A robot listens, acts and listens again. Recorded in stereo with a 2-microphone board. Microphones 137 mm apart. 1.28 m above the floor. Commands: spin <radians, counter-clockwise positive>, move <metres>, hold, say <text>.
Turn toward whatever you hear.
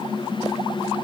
hold
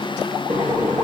spin -1.57
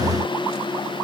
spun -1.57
hold
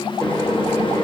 spin 0.17
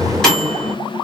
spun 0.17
say Found it: a microwave, straight ahead.